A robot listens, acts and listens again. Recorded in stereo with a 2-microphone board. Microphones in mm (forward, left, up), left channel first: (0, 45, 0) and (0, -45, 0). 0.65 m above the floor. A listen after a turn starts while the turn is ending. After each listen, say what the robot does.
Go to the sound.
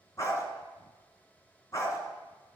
Turn 35° left.
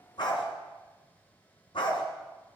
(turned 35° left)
Turn 110° left.
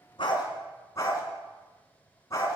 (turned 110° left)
Turn 35° left.
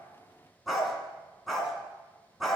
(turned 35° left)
Drive 1.0 m forward.
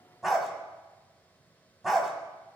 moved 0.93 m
Drive 1.0 m forward.
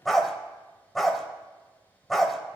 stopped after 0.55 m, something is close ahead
I am next to the dog barking.